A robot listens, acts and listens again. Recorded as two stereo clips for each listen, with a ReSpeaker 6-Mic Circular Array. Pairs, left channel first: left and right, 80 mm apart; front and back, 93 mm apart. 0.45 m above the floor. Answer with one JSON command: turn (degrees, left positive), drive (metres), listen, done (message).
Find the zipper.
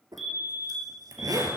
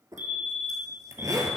{"turn": -125}
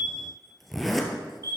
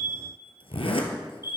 {"done": "Facing the zipper, 1 to 2 m away."}